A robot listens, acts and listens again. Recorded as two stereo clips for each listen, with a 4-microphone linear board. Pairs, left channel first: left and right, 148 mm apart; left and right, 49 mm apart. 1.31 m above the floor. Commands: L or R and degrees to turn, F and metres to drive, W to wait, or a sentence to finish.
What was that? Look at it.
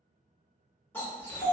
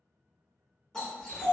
L30
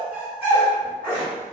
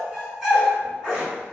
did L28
R10
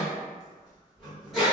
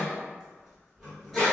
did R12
Facing the dog barking, 1 to 2 m away.